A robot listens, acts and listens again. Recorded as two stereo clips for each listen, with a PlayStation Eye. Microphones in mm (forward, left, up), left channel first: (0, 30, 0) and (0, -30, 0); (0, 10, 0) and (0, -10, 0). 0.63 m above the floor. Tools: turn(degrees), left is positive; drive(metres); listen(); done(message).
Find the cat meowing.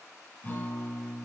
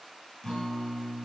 listen()
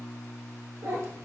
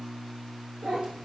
turn(degrees=-50)
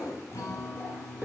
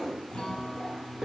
turn(degrees=-20)
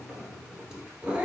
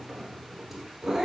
turn(degrees=-15)
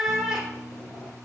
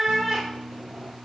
turn(degrees=-10)
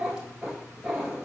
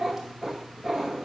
turn(degrees=-15)
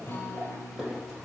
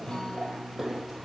done("Facing the cat meowing.")